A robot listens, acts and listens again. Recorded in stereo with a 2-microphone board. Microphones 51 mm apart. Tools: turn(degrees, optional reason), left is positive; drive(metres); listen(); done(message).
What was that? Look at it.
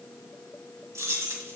turn(degrees=-65, reason="The keys jangling: about 65° right or 115° right.")
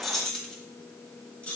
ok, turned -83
turn(degrees=30, reason="So it is at 30° left.")
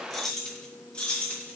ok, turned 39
turn(degrees=25, reason="The keys jangling is now 25° left.")
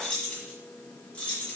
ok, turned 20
turn(degrees=25, reason="The keys jangling is now 25° left.")
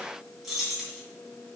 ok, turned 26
done("Found it: keys jangling, straight ahead, 2 to 4 m away.")